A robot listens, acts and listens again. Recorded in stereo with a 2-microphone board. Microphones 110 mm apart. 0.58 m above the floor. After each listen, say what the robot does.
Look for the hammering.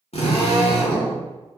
Turn 25° right.
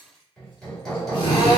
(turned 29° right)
Found it: hammering, straight ahead, 1 to 2 m away.